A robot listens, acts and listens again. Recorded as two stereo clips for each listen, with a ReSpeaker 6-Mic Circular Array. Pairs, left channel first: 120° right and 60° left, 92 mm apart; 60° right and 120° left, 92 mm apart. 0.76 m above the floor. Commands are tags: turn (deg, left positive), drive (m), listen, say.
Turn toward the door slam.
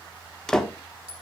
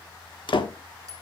<turn deg="-35"/>
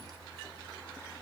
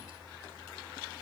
<say>Facing where the door slam came from. I can't hear it now.</say>